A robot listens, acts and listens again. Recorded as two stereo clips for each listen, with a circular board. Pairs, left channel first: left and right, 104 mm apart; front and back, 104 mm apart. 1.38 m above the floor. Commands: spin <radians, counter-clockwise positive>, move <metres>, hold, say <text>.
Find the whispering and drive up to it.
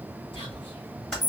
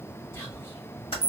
spin 1.05
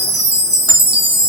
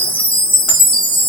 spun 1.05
hold
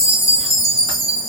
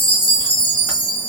hold
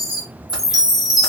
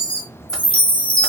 say Facing where the whispering came from. I can't hear it now. I did not reach it.